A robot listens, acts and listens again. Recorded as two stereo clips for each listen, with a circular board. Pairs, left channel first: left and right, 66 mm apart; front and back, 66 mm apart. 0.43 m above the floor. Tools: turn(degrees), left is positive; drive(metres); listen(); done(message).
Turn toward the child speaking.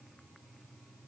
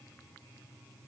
listen()
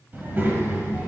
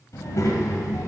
turn(degrees=-35)
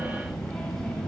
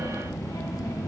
done("Facing the child speaking.")